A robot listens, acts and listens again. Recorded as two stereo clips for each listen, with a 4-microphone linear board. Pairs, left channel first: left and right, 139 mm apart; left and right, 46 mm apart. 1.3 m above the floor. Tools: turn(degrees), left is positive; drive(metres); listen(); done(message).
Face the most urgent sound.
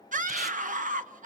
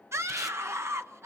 turn(degrees=-70)
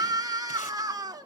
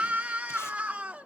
turn(degrees=-30)
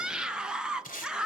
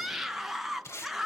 done("Facing the scream.")